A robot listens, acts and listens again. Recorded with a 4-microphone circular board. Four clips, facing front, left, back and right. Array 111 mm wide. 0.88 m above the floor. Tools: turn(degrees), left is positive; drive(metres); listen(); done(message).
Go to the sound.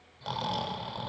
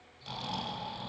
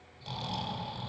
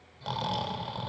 turn(degrees=-45)
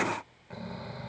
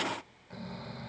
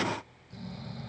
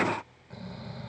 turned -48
drive(metres=1.0)
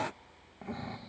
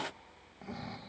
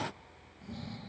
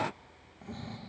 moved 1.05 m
turn(degrees=10)
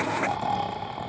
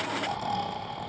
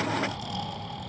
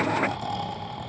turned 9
drive(metres=1.0)
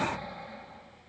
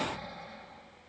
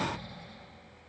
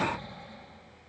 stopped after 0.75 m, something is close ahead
turn(degrees=10)
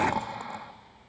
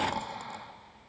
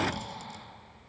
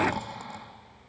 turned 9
done("I am next to the snoring.")